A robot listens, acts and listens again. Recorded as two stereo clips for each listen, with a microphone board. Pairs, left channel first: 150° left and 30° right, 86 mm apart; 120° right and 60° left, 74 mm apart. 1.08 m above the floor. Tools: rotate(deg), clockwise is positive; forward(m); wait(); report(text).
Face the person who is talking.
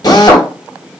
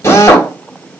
wait()
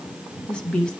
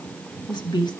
rotate(130)
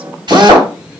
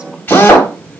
wait()
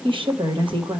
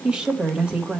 rotate(15)
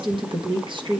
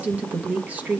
rotate(10)
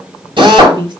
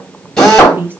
report("Facing the woman speaking, 1 to 2 m away.")